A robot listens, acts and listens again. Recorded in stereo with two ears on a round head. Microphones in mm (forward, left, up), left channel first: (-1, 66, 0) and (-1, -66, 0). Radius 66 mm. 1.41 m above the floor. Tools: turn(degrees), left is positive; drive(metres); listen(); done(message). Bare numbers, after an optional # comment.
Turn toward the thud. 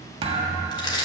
# The thud: about 40° right or 140° right.
turn(-40)
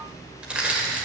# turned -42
listen()
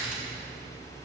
done("I heard a thud, but can't make it out now. It was about 5° left or 100° right.")